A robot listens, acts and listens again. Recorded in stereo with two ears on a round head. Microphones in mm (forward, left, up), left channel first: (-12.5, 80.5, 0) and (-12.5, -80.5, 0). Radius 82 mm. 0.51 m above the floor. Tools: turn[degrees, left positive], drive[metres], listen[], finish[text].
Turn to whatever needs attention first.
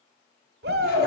Thought: The shout: about 65° right or 115° right.
Action: turn[-65]
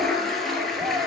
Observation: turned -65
Action: listen[]
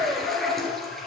Thought: So it is at 15° right.
Action: turn[-15]
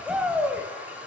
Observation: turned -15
Action: finish[Facing the shout, 1 to 2 m away.]